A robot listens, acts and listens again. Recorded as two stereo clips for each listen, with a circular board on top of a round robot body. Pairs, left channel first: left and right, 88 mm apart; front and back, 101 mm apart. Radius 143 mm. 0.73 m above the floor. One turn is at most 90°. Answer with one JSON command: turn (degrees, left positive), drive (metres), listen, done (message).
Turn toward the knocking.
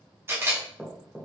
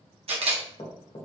{"turn": -10}
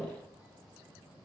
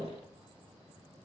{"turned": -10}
{"done": "Facing the knocking."}